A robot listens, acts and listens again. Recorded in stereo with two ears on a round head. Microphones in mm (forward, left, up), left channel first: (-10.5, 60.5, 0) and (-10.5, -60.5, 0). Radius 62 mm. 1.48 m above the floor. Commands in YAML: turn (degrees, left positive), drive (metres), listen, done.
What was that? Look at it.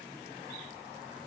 listen: true
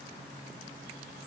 listen: true
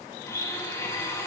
turn: 20
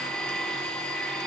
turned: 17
done: "Found it: a blender, straight ahead, 2 to 4 m away."